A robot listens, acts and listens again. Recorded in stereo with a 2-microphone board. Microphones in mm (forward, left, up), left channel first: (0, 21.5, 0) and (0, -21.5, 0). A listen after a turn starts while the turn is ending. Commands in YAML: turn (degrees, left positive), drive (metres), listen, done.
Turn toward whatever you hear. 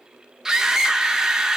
turn: -30
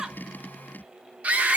turn: -140
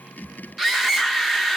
done: "Found it: a scream, straight ahead."